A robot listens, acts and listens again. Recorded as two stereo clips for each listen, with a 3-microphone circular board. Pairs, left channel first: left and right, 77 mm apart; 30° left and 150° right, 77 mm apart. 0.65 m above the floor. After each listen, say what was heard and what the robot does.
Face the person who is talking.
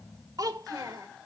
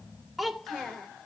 The child speaking: 60° right. Turn 60° right.
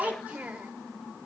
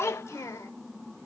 The child speaking is now 15° right. Turn 15° right.
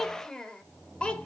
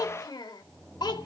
The child speaking is now 15° left. Turn 15° left.
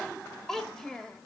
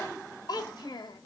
The child speaking is now 10° left. Turn 10° left.
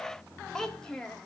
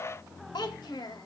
The child speaking is now 10° left. Turn 10° left.
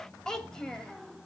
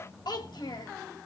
The child speaking is now 10° left. Turn 10° left.
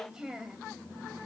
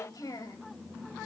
Facing the child speaking.